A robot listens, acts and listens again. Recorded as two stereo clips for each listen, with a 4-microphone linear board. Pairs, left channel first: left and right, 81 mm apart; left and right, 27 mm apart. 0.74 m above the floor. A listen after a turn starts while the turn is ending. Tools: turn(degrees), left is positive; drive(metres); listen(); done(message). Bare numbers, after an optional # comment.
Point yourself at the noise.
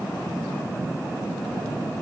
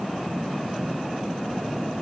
listen()
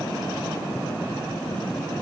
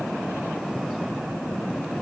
listen()
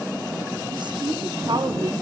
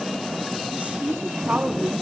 # The woman speaking: about 60° right or 120° right.
turn(-60)
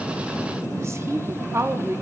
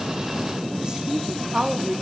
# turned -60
# So it is at 35° right.
turn(-35)
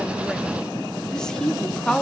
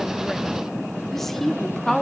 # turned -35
# The woman speaking is now 10° left.
turn(10)
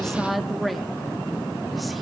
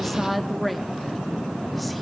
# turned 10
done("Found it: a woman speaking, straight ahead, under 1 m away.")